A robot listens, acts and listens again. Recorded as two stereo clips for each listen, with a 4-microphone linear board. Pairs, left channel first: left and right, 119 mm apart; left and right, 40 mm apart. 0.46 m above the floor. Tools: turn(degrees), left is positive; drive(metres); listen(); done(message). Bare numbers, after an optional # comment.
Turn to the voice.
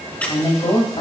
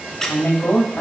# The woman speaking: about 55° left or 125° left.
turn(55)
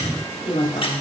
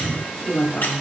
# So it is at 60° left.
turn(60)
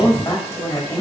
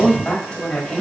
# The woman speaking is now 30° left.
turn(30)
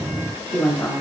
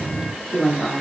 # The woman speaking is now 15° left.
turn(15)
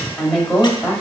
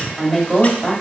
done("Found it: a woman speaking, straight ahead, 1 to 2 m away.")